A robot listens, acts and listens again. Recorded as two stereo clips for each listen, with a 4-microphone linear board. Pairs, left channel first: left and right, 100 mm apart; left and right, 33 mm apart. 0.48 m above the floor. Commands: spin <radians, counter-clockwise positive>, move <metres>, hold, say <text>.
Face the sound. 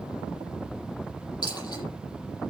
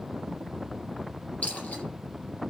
spin 0.70
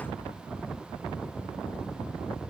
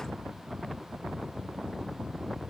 hold
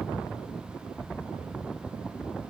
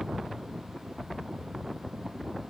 say I heard a dropped coin, but can't make it out now. It was about straight ahead or 100° left.